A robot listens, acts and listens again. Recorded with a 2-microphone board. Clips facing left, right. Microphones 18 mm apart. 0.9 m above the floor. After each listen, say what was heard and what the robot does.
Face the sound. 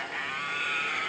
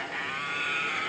Keep listening.
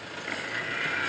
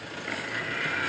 Keep listening.
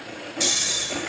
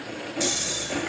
The snoring: about 15° left or 165° left. Turn 15° left.
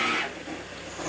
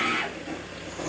Keep listening.
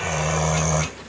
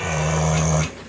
Found it: snoring, straight ahead.